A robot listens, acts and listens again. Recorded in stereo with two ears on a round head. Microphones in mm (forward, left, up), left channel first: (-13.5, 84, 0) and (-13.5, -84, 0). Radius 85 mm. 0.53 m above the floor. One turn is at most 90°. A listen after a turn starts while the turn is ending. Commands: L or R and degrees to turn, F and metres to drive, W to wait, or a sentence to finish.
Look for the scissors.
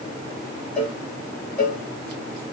W
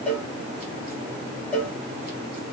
W
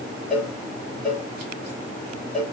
I can't make out scissors to turn to.